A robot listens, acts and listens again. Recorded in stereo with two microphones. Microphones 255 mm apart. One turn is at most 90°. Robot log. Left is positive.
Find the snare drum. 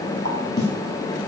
note: The snare drum: about 45° left or 135° left.
cmd yaw +45
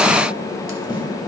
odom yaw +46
cmd idle
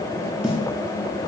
end: Facing the snare drum.